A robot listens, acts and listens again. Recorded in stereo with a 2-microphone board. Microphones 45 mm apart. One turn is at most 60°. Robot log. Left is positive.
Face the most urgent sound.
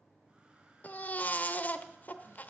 note: The baby crying: about 35° left or 145° left.
cmd yaw +35
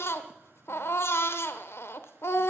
note: So it is at 105° left.
cmd yaw +60
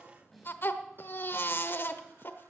note: The baby crying is now 60° left.
cmd yaw +60
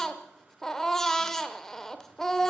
note: The baby crying is now 10° left.
cmd yaw +10
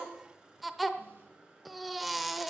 end: Facing the baby crying.